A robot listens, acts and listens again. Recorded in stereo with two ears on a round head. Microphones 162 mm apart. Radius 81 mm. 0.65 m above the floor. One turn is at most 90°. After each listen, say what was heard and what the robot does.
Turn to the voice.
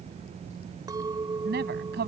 The woman speaking: about 60° right or 120° right. Turn 60° right.
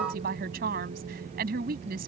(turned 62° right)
So it is at 55° right. Turn 55° right.
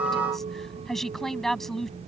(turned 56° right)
Facing the woman speaking.